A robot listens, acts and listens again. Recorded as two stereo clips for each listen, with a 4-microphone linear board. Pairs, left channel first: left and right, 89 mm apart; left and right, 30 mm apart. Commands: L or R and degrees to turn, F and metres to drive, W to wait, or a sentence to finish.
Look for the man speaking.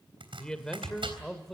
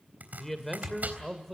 L30
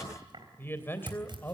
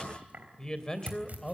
L155
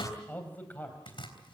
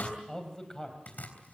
L20
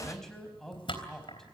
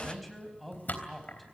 Found it: a man speaking, straight ahead, over 4 m away.